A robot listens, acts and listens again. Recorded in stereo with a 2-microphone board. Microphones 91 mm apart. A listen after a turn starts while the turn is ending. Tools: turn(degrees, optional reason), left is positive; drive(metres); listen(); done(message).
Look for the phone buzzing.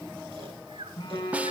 turn(degrees=65, reason="The phone buzzing: about 65° left or 115° left.")
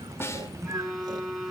done("Found it: a phone buzzing, straight ahead.")